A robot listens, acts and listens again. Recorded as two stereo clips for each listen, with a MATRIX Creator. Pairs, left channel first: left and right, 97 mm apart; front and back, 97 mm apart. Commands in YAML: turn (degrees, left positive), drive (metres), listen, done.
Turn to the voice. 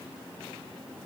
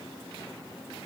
listen: true
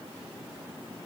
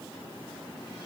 listen: true
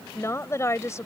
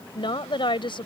turn: 30
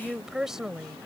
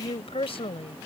done: "Facing the woman speaking."